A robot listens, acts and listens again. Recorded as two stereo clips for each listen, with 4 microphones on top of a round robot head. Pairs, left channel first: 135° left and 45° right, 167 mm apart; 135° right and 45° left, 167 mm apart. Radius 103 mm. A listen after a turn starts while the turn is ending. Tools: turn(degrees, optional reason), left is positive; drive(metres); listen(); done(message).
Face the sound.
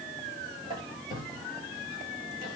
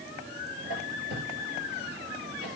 turn(degrees=15, reason="The squeak: 15° left.")
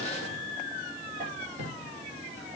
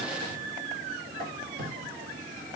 done("Found it: a squeak, straight ahead.")